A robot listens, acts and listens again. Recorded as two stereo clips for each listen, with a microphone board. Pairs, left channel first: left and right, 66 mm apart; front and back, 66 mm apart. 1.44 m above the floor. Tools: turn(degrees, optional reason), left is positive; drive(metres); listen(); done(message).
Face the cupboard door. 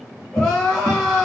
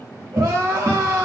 turn(degrees=-145, reason="The cupboard door: 145° right.")
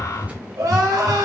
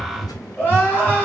turn(degrees=-20, reason="The cupboard door is now 20° right.")
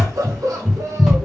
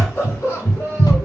done("Facing the cupboard door, 1 to 2 m away.")